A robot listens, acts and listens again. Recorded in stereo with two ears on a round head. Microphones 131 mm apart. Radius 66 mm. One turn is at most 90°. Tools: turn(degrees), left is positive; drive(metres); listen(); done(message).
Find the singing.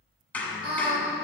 turn(degrees=-40)
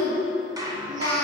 turn(degrees=-90)
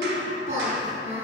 turn(degrees=-55)
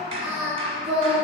turn(degrees=-10)
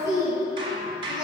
done("Found it: singing, straight ahead, over 4 m away.")